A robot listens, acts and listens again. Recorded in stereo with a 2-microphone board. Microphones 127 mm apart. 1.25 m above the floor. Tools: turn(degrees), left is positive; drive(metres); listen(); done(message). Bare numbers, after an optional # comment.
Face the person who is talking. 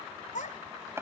turn(90)
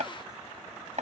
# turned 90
listen()
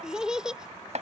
done("Facing the child speaking.")